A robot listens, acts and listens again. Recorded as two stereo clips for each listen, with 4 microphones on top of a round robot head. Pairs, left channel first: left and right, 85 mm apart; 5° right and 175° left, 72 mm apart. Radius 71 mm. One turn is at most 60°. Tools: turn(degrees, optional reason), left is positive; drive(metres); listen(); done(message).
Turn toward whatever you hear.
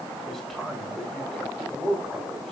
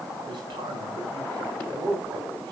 turn(degrees=60, reason="The man speaking: 175° left.")
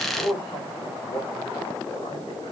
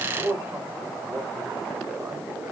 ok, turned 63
turn(degrees=60, reason="The man speaking is now 110° left.")
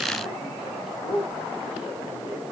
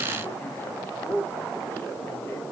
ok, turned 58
turn(degrees=55, reason="The man speaking is now 55° left.")
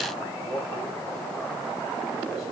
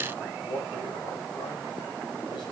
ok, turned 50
done("Facing the man speaking.")